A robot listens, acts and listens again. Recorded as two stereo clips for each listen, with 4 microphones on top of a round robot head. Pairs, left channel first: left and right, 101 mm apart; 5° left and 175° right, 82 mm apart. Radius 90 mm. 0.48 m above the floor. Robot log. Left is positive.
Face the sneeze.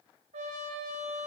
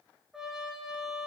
cmd idle
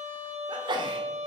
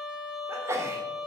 note: The sneeze: 125° right.
cmd yaw -125
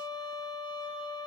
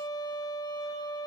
end: Facing where the sneeze came from. I can't hear it now.